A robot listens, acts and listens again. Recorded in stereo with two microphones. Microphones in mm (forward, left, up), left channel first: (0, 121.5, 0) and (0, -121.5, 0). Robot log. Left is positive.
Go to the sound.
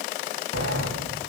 cmd yaw -90
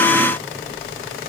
cmd fwd 1.0
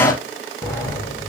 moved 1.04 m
note: The sliding door is now 15° left.
cmd yaw +15
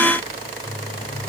cmd fwd 1.0
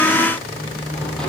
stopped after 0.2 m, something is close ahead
end: Blocked. The sliding door is further on, straight ahead.